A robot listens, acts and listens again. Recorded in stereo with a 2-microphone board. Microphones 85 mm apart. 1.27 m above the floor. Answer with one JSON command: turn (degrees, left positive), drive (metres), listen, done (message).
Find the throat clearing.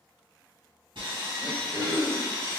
{"turn": -30}
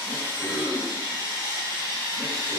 {"turn": -135}
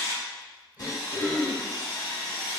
{"turn": -25}
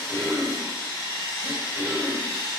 {"turn": -30}
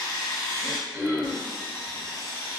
{"turn": -30}
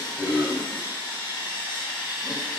{"done": "Facing the throat clearing, 1 to 2 m away."}